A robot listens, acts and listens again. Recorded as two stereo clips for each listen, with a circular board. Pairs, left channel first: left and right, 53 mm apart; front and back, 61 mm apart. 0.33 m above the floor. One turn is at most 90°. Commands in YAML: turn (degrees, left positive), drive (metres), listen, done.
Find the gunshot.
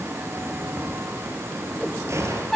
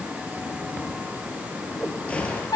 turn: -70
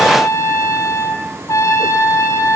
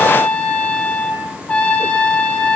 done: "Facing where the gunshot came from. I can't hear it now."